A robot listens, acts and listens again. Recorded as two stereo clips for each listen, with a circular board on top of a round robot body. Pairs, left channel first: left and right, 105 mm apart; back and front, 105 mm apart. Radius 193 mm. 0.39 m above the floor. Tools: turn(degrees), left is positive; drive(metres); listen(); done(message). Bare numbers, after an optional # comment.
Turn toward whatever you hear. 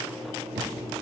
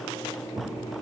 # The thud: 65° right.
turn(-65)
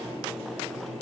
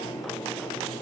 done("I heard a thud from this way, but can't make it out now.")